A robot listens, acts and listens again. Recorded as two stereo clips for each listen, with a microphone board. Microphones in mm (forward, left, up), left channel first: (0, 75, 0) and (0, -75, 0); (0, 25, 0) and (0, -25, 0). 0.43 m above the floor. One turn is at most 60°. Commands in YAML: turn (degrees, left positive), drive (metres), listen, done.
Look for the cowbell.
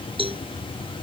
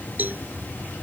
turn: -35
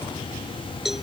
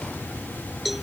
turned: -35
done: "Facing the cowbell."